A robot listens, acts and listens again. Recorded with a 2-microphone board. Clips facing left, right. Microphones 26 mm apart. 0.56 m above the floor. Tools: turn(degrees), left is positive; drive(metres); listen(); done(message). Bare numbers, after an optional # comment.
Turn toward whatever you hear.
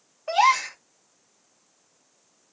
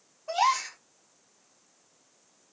# The gasp: about 60° left or 120° left.
turn(60)
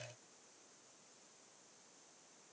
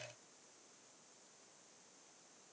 listen()
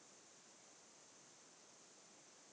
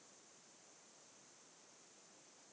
done("I heard a gasp, but can't make it out now. It was about straight ahead or 60° left.")